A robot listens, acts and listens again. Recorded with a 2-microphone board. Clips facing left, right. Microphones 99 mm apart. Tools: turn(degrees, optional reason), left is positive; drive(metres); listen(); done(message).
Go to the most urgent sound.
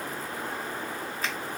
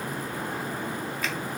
listen()
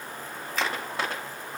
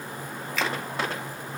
listen()
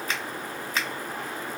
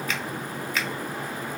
done("I can't make out anything urgent, only a finger snap.")